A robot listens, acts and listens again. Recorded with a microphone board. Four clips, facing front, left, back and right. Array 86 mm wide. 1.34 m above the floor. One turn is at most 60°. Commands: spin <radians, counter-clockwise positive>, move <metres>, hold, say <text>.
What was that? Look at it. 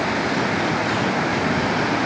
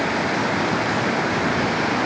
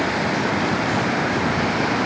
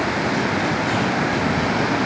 hold
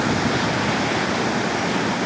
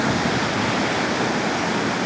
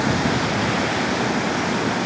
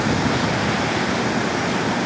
hold
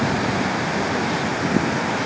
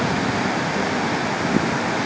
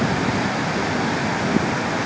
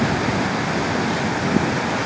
say I can't make out anything.